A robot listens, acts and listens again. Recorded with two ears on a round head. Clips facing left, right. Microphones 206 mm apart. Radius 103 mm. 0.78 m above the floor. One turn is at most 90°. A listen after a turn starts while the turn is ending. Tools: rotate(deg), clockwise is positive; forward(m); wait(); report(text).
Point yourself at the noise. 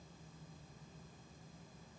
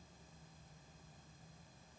wait()
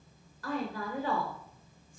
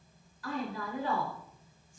rotate(-45)
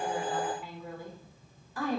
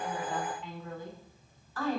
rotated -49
rotate(-15)
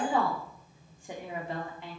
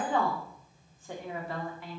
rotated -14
rotate(-20)
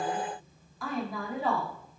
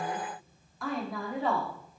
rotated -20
report("Facing the woman speaking.")